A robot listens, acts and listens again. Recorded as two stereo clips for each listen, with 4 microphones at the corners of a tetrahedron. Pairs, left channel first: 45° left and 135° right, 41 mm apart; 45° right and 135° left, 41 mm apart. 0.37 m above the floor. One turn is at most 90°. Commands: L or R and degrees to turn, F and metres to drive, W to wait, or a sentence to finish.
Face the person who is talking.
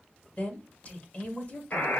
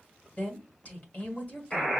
Facing the woman speaking, 1 to 2 m away.